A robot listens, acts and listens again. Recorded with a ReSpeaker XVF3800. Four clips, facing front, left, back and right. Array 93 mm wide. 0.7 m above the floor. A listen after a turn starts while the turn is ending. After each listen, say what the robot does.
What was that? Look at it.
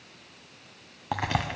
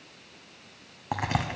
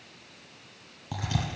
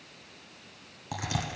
Turn 35° left.
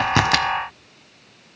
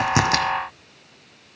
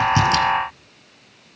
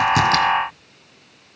I heard a crack from this way, but can't make it out now.